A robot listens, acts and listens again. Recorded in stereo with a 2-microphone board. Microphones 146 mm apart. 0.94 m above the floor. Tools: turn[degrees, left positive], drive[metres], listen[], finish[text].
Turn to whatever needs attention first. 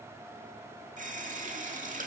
Action: listen[]
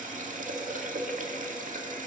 Action: listen[]
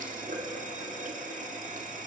Action: finish[I can't make out anything urgent, only a running tap.]